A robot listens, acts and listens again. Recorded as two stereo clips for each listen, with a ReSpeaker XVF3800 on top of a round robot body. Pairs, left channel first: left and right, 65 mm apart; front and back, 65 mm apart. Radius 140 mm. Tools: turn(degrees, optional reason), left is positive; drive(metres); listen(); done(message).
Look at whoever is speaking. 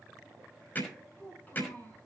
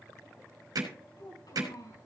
turn(degrees=25, reason="The child speaking: 25° left.")
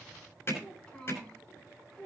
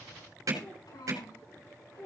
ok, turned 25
turn(degrees=15, reason="The child speaking is now 15° left.")
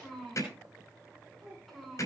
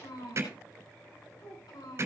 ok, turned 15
done("Found it: a child speaking, straight ahead.")